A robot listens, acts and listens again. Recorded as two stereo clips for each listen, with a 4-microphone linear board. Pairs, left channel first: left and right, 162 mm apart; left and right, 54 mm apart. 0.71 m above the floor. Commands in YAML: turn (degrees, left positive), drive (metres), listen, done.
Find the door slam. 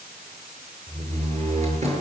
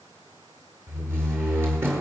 turn: -45
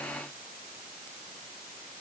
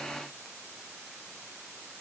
listen: true
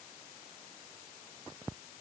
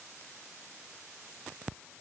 done: "I heard a door slam, but can't make it out now. It was about straight ahead or 90° right."